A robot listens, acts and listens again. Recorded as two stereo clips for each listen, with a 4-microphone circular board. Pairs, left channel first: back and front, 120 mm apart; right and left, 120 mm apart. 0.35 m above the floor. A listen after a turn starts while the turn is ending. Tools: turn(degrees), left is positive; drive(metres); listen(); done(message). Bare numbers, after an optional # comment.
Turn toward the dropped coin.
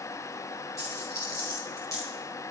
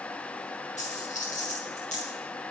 # The dropped coin: 115° right.
turn(-115)
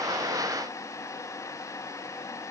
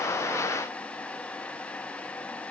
done("I heard a dropped coin from this way, but can't make it out now.")